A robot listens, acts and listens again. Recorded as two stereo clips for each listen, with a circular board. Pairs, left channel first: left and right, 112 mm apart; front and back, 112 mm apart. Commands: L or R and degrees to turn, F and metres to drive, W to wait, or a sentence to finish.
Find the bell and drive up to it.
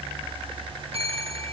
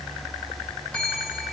R80
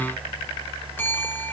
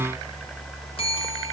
L20
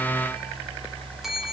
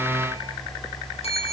F1.0
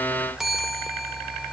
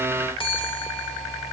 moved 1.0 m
F1.0
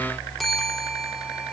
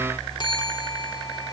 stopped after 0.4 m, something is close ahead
I am next to the bell.